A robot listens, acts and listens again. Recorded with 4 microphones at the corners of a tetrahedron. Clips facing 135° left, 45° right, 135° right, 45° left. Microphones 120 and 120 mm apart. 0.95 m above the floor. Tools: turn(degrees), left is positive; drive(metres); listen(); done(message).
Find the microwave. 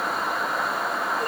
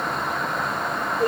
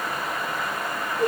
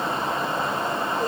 listen()
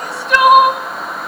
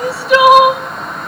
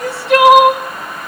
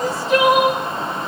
listen()
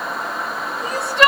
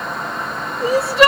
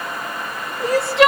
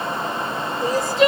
done("I can't make out a microwave, only crying.")